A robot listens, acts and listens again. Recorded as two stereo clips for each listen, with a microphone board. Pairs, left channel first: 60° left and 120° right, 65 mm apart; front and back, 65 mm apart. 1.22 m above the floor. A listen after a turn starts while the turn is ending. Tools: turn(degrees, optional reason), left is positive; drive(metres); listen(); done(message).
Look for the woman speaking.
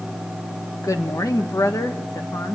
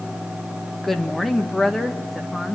turn(degrees=85, reason="The woman speaking: 85° left.")
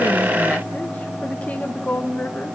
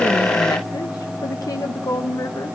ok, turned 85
done("Facing the woman speaking.")